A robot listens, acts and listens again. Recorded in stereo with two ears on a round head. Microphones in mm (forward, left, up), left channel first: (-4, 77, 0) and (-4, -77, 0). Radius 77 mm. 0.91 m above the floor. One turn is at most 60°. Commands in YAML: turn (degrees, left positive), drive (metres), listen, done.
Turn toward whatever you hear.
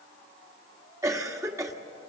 turn: -20
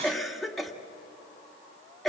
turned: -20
done: "Facing the cough."